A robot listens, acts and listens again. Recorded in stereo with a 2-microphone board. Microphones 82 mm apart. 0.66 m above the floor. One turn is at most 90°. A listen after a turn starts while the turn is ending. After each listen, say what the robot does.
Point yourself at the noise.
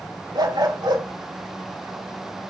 Turn 90° right.
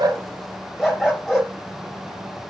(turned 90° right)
Facing the dog barking.